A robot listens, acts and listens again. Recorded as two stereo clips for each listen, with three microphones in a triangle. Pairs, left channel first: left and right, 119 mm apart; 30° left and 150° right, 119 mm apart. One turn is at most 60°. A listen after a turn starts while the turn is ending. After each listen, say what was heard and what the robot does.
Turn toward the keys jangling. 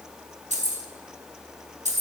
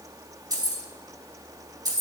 The keys jangling: 90° right. Turn 60° right.
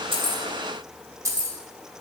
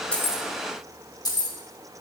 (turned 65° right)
The keys jangling is now 25° right. Turn 25° right.
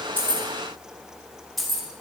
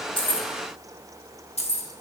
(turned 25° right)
Facing the keys jangling.